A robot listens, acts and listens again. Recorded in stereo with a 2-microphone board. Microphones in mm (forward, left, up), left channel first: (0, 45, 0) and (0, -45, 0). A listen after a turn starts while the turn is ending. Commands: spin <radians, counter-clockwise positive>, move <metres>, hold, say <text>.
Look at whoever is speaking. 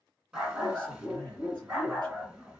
spin -0.96
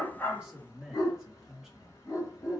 say Found it: a man speaking, straight ahead, 2 to 4 m away.